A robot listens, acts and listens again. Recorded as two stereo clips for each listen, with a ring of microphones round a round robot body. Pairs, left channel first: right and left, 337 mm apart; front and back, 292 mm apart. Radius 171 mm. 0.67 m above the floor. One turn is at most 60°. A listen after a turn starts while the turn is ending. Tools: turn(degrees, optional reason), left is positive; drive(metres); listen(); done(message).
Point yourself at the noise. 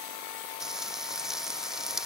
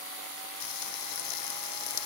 done("Facing the frying.")